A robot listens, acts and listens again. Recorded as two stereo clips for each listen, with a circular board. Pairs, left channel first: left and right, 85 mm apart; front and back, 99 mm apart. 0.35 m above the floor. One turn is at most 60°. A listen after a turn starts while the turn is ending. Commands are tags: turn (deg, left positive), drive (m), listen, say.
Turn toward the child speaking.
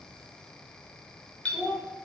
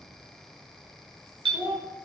<turn deg="-60"/>
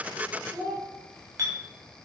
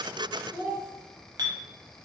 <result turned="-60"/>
<turn deg="-60"/>
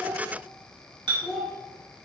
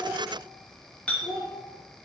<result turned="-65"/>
<say>Facing the child speaking, 1 to 2 m away.</say>